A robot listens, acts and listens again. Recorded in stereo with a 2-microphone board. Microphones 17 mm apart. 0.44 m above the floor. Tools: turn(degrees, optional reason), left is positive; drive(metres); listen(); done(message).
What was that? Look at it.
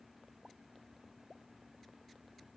listen()
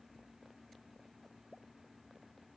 listen()
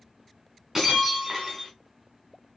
turn(degrees=-30, reason="The breaking glass: about 30° right or 150° right.")
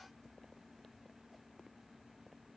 listen()
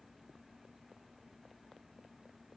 done("I heard breaking glass, but can't make it out now. It was about straight ahead or 120° right.")